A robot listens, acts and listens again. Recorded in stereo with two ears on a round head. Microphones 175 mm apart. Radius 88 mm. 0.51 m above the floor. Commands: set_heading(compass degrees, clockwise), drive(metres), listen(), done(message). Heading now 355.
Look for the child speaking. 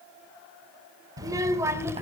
set_heading(25)
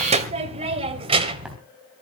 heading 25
set_heading(175)
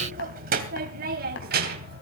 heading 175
set_heading(225)
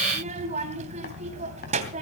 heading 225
set_heading(260)
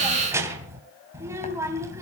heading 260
set_heading(275)
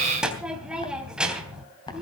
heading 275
done("Facing the child speaking, 2 to 4 m away.")